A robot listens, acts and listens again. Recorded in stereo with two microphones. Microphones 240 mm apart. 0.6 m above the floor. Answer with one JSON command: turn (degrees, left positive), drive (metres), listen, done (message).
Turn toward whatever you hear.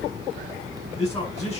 {"turn": 25}
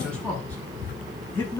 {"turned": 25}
{"turn": 10}
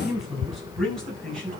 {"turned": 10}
{"done": "Found it: a man speaking, straight ahead."}